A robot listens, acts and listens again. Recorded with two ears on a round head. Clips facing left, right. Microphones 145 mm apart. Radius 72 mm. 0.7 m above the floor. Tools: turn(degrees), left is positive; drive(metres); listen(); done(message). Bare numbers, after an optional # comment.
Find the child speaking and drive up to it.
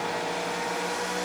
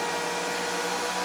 listen()
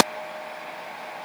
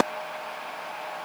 listen()
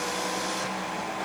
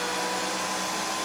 done("I can't make out a child speaking to turn to.")